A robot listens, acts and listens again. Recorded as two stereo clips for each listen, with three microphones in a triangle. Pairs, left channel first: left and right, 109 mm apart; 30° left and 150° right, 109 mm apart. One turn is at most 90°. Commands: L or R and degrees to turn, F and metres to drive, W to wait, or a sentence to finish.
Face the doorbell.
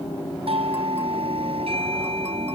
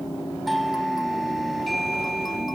R60
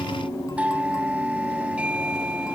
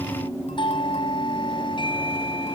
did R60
R10
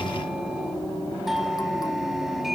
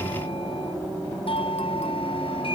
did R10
Found it: a doorbell, straight ahead.